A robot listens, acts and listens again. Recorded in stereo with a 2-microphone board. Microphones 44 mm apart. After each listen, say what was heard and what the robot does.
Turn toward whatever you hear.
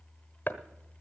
The chopping: about 50° left or 130° left. Turn 50° left.
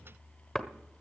Facing the chopping.